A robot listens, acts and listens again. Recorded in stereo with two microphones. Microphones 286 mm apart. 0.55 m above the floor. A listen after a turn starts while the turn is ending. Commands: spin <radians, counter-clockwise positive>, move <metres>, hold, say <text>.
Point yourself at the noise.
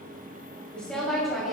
spin 0.52
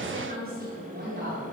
spin -0.70
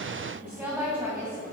spin -0.17
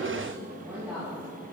spin -0.17
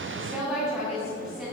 spin -0.17
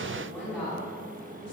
say Facing the woman speaking, 2 to 4 m away.